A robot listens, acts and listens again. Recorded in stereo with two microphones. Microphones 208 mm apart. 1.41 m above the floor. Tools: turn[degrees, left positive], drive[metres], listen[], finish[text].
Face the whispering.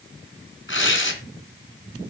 Action: listen[]
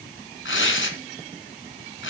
Action: listen[]
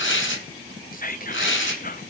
Thought: The whispering: about 40° left or 140° left.
Action: turn[40]
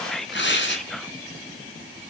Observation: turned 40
Action: finish[Found it: whispering, straight ahead, under 1 m away.]